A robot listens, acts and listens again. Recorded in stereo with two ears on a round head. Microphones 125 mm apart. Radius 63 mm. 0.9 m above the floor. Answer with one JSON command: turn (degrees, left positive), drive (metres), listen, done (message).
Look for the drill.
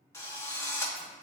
{"turn": 20}
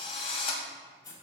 {"turn": 145}
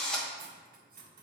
{"done": "Facing the drill."}